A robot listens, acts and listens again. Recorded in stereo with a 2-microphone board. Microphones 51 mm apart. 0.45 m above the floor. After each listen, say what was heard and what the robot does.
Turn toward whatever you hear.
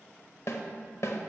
The snare drum: about 65° left or 115° left. Turn 65° left.
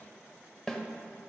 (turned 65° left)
So it is at 10° left. Turn 10° left.
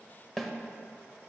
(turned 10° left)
Found it: a snare drum, straight ahead.